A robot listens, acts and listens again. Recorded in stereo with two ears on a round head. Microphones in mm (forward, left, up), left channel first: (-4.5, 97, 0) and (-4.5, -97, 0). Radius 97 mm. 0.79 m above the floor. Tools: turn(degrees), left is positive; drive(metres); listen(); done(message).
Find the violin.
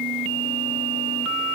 listen()
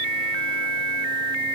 listen()
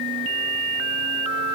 done("I can't make out a violin to turn to.")